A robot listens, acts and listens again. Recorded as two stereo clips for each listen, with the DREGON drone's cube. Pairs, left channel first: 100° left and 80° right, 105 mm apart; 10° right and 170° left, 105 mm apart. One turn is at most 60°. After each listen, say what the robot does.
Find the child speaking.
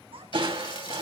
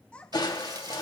Turn 60° right.
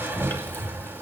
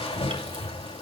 Turn 30° right.
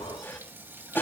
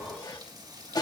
Keep listening.
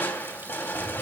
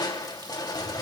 I heard a child speaking from this way, but can't make it out now.